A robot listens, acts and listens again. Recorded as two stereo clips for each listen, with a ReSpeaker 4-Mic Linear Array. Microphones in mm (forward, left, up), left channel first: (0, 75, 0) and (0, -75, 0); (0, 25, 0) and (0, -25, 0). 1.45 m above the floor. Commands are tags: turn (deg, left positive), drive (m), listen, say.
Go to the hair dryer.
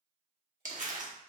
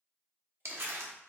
<listen/>
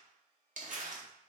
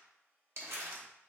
<turn deg="-45"/>
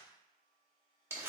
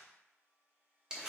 <turn deg="-85"/>
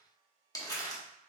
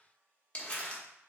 <turn deg="-45"/>
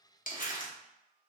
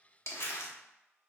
<drive m="1.0"/>
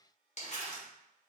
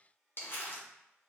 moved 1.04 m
<drive m="1.0"/>
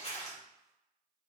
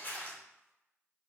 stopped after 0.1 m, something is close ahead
<listen/>
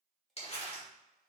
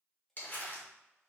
<say>I am next to the hair dryer.</say>